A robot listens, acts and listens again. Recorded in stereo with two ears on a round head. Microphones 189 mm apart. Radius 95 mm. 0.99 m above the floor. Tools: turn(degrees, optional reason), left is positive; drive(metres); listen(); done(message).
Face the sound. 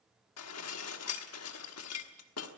turn(degrees=90)
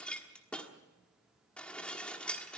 done("Facing the dishes clattering.")